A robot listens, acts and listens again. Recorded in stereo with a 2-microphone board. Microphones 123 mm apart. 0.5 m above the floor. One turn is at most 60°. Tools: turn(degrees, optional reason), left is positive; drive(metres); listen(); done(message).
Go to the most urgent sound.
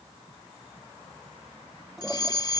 turn(degrees=35, reason="The fire alarm: about 35° left or 145° left.")
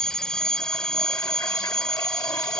drive(metres=1.0)
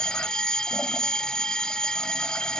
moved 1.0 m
turn(degrees=10, reason="The fire alarm is now 10° left.")
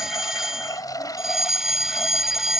drive(metres=1.0)
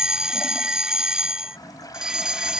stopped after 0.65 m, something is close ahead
turn(degrees=-10, reason="The fire alarm is now 10° right.")
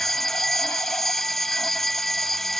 done("I am next to the fire alarm.")